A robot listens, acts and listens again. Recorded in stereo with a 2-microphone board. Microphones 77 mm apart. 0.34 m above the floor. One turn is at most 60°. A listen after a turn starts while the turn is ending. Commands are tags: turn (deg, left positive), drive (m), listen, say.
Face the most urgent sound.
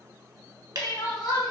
<turn deg="60"/>
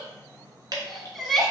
<say>Found it: crying, straight ahead, under 1 m away.</say>